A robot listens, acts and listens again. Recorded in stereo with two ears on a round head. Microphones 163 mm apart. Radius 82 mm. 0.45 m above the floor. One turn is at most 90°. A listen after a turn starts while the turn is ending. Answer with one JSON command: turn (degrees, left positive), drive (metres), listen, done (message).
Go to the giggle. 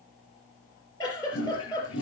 {"turn": 20}
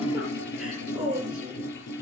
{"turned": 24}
{"drive": 1.0}
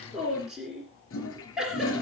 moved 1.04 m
{"drive": 1.0}
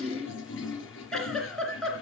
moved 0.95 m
{"drive": 1.0}
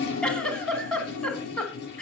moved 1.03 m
{"drive": 1.0}
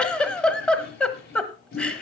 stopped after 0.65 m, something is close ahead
{"done": "Arrived at the giggle, straight ahead."}